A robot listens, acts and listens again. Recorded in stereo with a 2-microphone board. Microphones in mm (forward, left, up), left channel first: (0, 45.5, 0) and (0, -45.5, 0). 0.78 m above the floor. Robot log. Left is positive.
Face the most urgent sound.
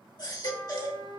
note: The baby crying: about 45° left or 135° left.
cmd yaw +45
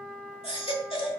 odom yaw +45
note: So it is at 95° left.
cmd yaw +95
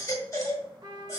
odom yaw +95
note: The baby crying is now 35° left.
cmd yaw +35
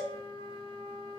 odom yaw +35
end: Facing the baby crying.